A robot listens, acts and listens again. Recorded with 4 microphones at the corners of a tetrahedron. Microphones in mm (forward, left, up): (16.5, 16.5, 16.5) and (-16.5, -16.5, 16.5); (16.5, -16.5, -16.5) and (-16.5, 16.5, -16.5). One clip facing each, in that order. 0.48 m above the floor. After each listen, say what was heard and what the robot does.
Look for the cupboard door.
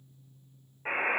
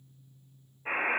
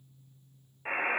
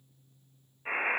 Keep listening.
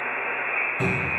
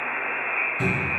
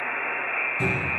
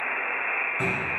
The cupboard door: 90° left. Turn 90° left.
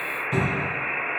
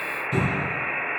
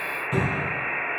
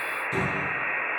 Found it: a cupboard door, straight ahead.